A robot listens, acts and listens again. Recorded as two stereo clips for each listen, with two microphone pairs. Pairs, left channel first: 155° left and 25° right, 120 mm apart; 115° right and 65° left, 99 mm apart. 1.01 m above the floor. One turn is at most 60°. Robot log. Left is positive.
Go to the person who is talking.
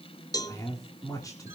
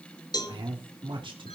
note: The man speaking: 95° left.
cmd yaw +60
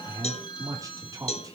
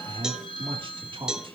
note: The man speaking is now 35° left.
cmd yaw +35
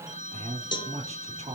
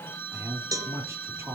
cmd fwd 1.0
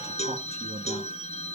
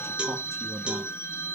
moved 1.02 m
cmd idle
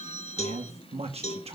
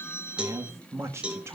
cmd fwd 1.0
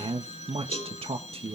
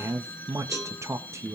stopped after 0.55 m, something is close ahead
end: I am next to the man speaking.